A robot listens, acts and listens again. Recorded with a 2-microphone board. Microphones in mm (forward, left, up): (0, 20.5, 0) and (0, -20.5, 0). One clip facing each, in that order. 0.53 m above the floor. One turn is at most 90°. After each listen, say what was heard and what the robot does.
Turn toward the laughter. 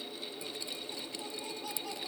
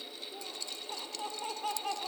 The laughter: about 45° right or 135° right. Turn 45° right.
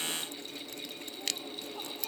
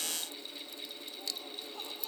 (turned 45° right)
Keep listening.
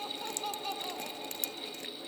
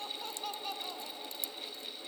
Found it: laughter, straight ahead.